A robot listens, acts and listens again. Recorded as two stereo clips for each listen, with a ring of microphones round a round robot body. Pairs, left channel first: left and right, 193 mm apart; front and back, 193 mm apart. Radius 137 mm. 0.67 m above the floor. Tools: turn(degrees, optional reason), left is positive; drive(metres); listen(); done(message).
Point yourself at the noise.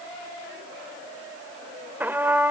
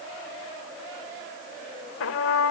turn(degrees=-10, reason="The trumpet: 10° right.")
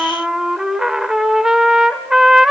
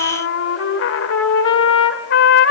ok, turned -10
done("Facing the trumpet.")